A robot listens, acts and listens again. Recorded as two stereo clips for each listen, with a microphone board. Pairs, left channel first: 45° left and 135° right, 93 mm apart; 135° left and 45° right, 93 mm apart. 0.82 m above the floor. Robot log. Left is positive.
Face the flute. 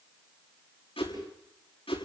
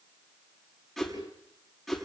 cmd idle
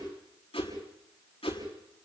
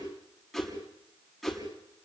cmd idle
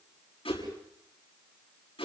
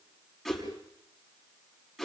end: I can't make out a flute, only a whoosh.